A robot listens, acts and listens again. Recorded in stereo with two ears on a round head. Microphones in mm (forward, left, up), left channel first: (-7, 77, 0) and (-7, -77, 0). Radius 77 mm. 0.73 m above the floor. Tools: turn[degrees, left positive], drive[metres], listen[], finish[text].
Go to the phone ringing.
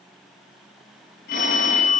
Thought: The phone ringing: about 55° left or 125° left.
Action: turn[55]
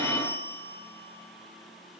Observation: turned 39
Thought: So it is at 15° left.
Action: turn[15]
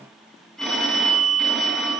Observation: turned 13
Action: drive[1.0]
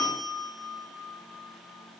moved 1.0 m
Action: drive[1.0]
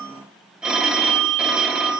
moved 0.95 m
Action: drive[1.0]
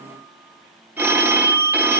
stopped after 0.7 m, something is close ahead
Thought: The phone ringing is now 10° right.
Action: turn[-10]
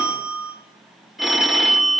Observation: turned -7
Action: finish[I am next to the phone ringing.]